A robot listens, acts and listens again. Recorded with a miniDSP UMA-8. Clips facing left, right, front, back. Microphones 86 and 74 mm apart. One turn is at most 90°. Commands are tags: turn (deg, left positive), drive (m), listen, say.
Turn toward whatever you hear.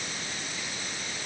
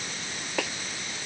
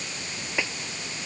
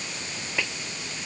<turn deg="-75"/>
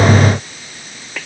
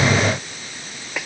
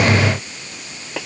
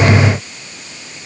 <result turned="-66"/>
<turn deg="-10"/>
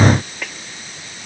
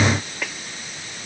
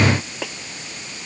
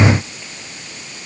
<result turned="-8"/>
<say>Found it: a snare drum, straight ahead.</say>